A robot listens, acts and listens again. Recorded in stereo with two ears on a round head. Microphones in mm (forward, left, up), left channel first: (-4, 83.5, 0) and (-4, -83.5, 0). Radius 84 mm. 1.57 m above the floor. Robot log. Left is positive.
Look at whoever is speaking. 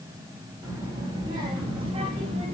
note: The child speaking: about 35° right or 145° right.
cmd yaw -35
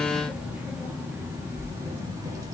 note: So it is at 20° right.
cmd yaw -20
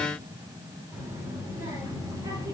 note: The child speaking is now 20° right.
cmd yaw -20
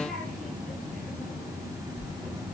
end: Found it: a child speaking, straight ahead, 2 to 4 m away.